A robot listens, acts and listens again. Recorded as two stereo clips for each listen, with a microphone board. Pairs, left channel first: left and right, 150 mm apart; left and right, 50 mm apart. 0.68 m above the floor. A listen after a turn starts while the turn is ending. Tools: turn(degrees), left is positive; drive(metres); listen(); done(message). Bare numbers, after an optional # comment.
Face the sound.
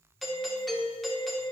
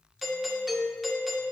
turn(30)
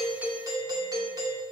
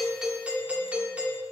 # So it is at 30° right.
turn(-30)
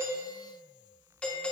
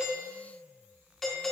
# The doorbell is now 10° left.
turn(10)
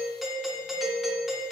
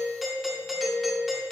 done("Found it: a doorbell, straight ahead.")